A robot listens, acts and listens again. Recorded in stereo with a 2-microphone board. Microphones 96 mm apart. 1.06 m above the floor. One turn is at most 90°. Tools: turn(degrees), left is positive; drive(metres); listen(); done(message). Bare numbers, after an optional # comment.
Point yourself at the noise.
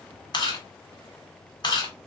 # The chewing: about 50° left or 130° left.
turn(50)
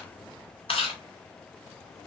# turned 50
# So it is at 80° left.
turn(80)
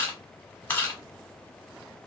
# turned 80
# The chewing is now 20° left.
turn(20)
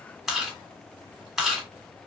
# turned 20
done("Facing the chewing, 2 to 4 m away.")